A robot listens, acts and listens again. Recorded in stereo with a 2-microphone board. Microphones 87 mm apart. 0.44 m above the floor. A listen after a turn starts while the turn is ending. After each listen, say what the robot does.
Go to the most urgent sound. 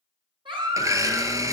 Turn 90° right.
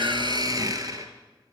Keep listening.
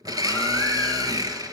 Keep listening.
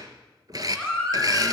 Drive 1.0 m forward.
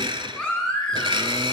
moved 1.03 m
Turn 10° left.
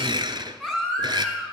Drive 1.0 m forward.
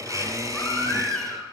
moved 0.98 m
Drive 1.0 m forward.
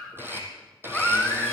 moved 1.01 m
Drive 1.0 m forward.
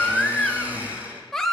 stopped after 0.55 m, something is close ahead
Arrived at the baby crying, straight ahead.